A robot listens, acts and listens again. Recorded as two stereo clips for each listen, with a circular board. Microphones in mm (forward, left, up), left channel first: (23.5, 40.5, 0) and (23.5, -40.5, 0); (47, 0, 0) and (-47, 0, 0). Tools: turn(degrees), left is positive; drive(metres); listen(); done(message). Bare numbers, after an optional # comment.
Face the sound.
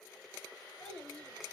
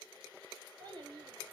# The child speaking: 150° left.
turn(150)
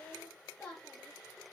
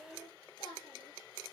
# The child speaking is now 15° left.
turn(15)
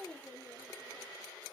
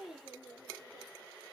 done("Found it: a child speaking, straight ahead, over 4 m away.")